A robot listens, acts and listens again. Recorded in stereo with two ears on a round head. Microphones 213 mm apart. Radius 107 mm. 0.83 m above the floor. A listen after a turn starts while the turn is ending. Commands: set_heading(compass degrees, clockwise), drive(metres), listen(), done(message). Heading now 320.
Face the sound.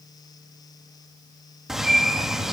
set_heading(290)
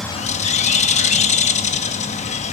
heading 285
set_heading(140)
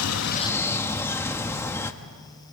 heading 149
set_heading(139)
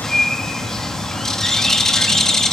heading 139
done("Facing the bird, under 1 m away.")